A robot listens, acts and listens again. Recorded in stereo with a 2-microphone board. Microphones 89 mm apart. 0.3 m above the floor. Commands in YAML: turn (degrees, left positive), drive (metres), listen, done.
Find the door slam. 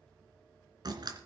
turn: -50
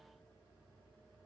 listen: true
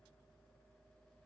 done: "I heard a door slam, but can't make it out now. It was about straight ahead or 80° right."